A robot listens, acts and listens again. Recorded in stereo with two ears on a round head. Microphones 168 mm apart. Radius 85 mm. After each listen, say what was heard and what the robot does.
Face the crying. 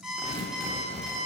Keep listening.
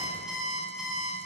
Keep listening.
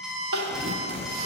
Turn 90° right.
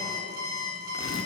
Keep listening.
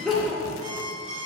Found it: crying, straight ahead.